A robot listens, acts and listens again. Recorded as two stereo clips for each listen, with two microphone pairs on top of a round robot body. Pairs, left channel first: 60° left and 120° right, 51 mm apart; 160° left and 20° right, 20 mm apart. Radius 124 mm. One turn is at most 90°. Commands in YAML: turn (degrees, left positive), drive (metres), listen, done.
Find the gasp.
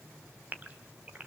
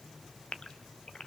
turn: -90
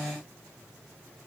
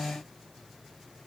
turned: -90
turn: -80
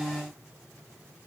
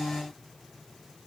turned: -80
done: "Facing where the gasp came from. I can't hear it now."